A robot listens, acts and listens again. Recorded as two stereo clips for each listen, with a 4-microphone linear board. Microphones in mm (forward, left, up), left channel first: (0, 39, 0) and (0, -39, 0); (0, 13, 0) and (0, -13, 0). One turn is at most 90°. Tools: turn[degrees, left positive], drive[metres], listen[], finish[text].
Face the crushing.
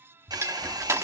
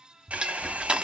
Thought: The crushing: about 35° right or 145° right.
Action: turn[-35]
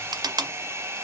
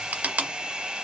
Thought: So it is at 110° right.
Action: turn[-90]
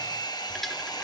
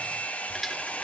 Action: finish[Facing the crushing.]